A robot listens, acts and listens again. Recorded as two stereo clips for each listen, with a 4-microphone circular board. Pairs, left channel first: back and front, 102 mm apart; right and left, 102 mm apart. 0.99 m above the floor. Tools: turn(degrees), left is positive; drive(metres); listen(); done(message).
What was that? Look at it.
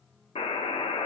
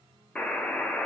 turn(degrees=-170)
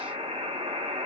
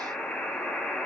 turn(degrees=-10)
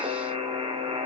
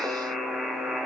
done("Found it: a buzzer, straight ahead, under 1 m away.")